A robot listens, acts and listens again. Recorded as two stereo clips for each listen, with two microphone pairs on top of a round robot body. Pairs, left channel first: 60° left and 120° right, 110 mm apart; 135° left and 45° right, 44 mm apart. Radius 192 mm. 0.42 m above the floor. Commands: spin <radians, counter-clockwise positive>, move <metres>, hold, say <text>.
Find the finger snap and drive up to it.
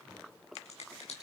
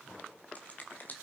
spin 1.48
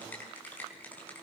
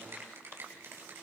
spin -0.26
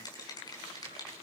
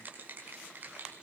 move 1.0
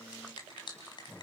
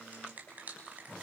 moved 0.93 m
spin 0.17
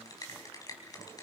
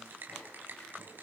move 1.0
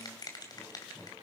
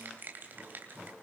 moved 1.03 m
move 1.0
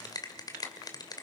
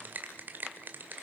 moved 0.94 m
move 1.0
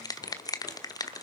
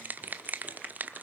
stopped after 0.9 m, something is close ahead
say Arrived at the finger snap, straight ahead.